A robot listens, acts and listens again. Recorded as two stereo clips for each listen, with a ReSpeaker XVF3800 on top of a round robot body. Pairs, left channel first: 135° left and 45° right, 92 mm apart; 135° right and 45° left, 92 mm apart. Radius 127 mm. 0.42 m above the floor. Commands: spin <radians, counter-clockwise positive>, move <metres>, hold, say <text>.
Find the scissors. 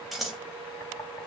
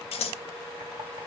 spin -2.36
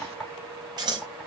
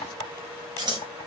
say Found it: scissors, straight ahead.